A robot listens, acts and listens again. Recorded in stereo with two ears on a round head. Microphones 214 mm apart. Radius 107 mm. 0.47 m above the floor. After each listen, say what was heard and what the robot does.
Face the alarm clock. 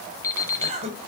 Turn 30° left.
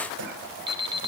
So it is at 20° right. Turn 20° right.
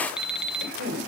Found it: an alarm clock, straight ahead.